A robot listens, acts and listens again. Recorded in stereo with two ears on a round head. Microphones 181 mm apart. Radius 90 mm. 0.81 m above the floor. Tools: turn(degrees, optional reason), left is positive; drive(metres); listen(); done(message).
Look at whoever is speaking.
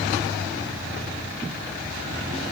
listen()
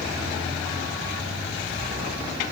listen()
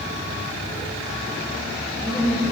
turn(degrees=30)
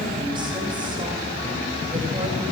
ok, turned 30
turn(degrees=-25, reason="So it is at 25° right.")
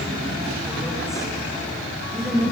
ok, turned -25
done("Found it: a woman speaking, straight ahead, over 4 m away.")